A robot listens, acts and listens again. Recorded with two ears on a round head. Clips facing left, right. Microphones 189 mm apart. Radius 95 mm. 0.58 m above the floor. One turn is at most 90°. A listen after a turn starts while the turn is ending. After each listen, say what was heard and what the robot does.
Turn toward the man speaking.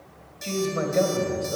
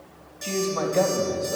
The man speaking: about 15° left or 165° left. Turn 15° left.
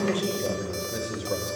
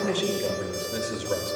Turn 30° right.
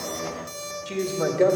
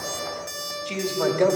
Found it: a man speaking, straight ahead, 1 to 2 m away.